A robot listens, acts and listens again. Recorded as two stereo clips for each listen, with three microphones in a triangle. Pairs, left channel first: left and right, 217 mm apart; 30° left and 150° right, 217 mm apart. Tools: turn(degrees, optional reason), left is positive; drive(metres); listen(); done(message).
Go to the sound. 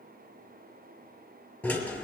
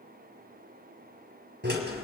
turn(degrees=175, reason="The drill: 175° left.")
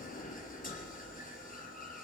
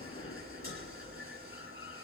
turn(degrees=40, reason="The drill is now 40° left.")
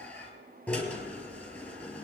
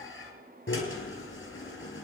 drive(metres=1.0)
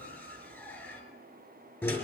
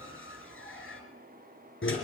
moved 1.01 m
turn(degrees=10, reason="The drill is now 10° left.")
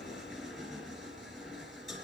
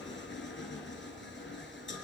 drive(metres=1.0)
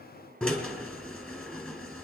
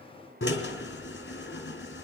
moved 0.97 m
drive(metres=1.0)
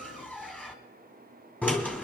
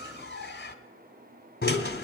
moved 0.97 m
drive(metres=1.0)
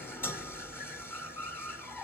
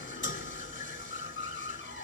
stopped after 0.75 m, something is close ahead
turn(degrees=10, reason="The drill is now 10° left.")
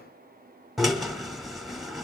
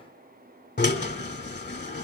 done("I am next to the drill.")